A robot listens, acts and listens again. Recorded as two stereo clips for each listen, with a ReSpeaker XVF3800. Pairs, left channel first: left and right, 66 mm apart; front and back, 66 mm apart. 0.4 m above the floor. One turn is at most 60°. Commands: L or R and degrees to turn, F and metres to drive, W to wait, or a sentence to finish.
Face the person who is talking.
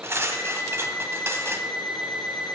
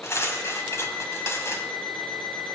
W
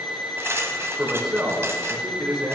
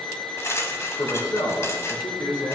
R15
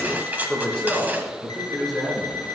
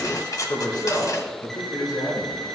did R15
Found it: a man speaking, straight ahead, over 4 m away.